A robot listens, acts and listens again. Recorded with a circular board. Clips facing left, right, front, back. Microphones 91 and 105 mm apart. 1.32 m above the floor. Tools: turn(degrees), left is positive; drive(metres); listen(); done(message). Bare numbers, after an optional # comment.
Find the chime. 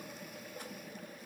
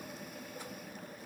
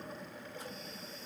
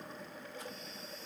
listen()
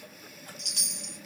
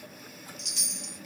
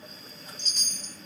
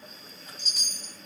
# The chime: 95° left.
turn(95)
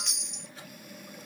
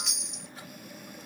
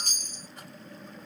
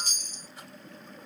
done("Facing the chime.")